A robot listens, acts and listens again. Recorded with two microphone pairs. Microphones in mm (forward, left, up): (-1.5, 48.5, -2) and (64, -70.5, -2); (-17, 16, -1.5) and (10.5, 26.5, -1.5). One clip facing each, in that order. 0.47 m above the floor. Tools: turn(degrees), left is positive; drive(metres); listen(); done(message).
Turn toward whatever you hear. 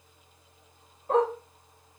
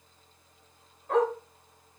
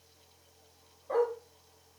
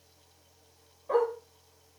turn(degrees=55)
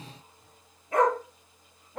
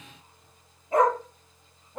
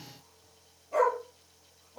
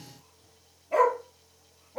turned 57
done("Found it: a dog barking, straight ahead, over 4 m away.")